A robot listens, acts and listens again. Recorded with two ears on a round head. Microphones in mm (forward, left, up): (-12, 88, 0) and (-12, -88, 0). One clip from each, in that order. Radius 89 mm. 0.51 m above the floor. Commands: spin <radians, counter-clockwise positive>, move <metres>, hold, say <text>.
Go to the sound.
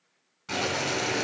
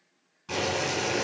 spin 0.44
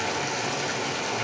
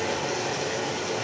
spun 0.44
spin 2.27
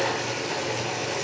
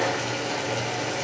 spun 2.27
spin -0.17
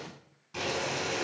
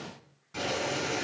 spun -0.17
move 1.0
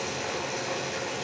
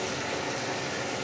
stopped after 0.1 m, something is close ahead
say Blocked. The boiling is further on, straight ahead.